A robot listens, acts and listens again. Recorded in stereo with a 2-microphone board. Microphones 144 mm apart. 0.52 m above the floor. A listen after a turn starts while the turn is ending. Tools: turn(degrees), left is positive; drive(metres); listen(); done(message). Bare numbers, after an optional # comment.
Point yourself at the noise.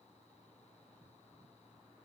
listen()
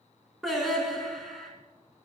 turn(30)
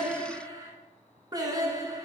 # So it is at 30° right.
turn(-30)
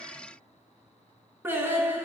# The singing is now 15° right.
turn(-15)
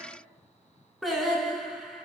done("Facing the singing, 1 to 2 m away.")